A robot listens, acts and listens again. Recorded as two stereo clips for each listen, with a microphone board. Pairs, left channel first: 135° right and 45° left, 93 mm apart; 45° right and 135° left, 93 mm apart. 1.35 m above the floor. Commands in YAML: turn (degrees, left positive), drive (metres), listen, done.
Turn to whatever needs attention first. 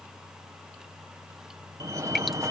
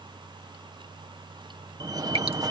turn: 95
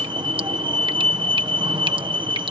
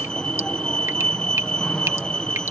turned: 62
turn: 35
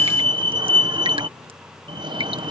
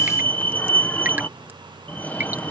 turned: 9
turn: 25
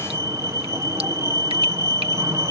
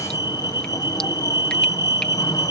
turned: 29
done: "Facing the fire alarm."